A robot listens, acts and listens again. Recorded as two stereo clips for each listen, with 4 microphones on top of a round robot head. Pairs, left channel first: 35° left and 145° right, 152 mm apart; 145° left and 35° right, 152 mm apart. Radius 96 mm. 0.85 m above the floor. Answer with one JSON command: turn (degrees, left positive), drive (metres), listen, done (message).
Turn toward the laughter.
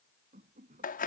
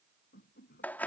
{"turn": 175}
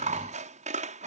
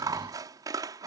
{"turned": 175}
{"listen": true}
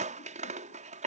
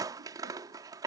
{"listen": true}
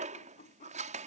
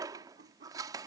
{"done": "Facing the laughter."}